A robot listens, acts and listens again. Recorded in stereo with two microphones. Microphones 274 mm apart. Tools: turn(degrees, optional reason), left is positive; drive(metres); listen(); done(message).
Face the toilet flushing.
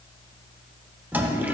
turn(degrees=-30)
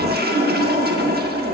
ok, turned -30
turn(degrees=-140, reason="So it is at 140° right.")
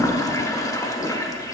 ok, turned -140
turn(degrees=15, reason="The toilet flushing is now 15° left.")
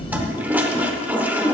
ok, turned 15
done("Facing the toilet flushing.")